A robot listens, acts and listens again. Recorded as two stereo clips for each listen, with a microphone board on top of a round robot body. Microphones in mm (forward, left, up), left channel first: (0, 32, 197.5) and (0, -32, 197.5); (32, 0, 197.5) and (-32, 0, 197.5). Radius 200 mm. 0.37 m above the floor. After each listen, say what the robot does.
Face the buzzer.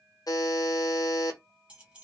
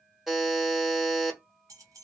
Turn 95° left.
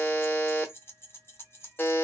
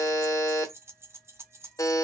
Turn 30° left.
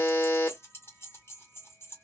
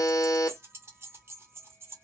Turn 30° left.
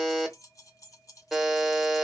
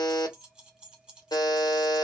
Found it: a buzzer, straight ahead, 1 to 2 m away.